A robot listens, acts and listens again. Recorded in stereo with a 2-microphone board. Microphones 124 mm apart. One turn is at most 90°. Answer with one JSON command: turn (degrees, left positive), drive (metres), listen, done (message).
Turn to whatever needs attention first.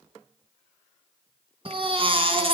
{"turn": -45}
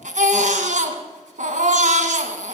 {"turn": -90}
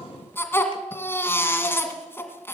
{"turn": 20}
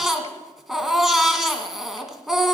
{"done": "Facing the baby crying."}